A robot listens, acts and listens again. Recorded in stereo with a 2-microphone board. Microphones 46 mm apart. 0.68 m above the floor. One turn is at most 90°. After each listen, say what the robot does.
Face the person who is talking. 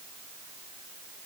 Keep listening.
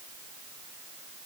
Keep listening.
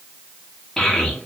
Turn 30° left.
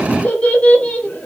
Turn 90° left.
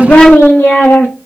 Turn 85° left.
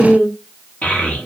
Turn 40° left.
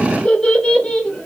Turn 25° left.
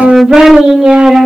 Turn 10° right.
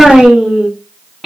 Facing the child speaking, 1 to 2 m away.